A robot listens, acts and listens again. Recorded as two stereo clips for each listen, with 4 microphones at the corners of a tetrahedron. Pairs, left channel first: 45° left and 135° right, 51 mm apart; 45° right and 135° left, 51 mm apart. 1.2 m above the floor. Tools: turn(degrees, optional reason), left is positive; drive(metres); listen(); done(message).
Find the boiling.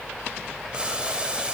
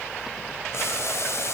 turn(degrees=-65, reason="The boiling: 65° right.")
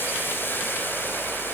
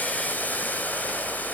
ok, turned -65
turn(degrees=10, reason="The boiling is now 10° left.")
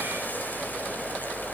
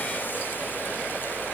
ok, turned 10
listen()
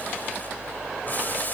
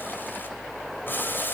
done("Facing the boiling.")